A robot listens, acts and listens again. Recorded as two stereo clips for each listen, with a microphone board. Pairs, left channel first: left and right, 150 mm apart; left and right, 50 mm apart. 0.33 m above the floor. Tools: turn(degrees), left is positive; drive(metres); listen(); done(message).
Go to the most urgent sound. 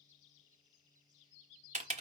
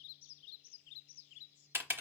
listen()
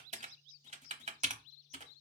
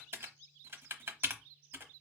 listen()
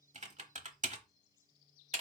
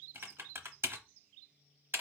done("I can't make out anything urgent, only typing on a keyboard.")